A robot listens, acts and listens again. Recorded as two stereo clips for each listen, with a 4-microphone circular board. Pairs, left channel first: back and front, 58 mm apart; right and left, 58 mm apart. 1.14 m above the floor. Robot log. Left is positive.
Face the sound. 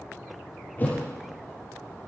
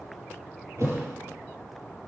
note: The thud: 120° left.
cmd yaw +120
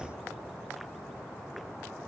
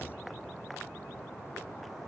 end: I heard a thud from this way, but can't make it out now.